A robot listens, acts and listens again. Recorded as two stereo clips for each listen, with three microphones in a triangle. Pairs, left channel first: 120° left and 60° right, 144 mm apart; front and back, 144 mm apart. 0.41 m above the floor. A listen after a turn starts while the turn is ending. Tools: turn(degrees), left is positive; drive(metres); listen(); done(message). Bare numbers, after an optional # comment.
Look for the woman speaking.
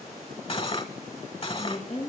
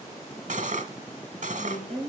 # The woman speaking: 80° left.
turn(80)
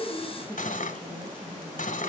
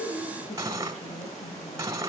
# The woman speaking is now 35° left.
turn(35)
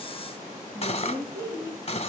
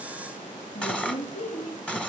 done("Facing the woman speaking.")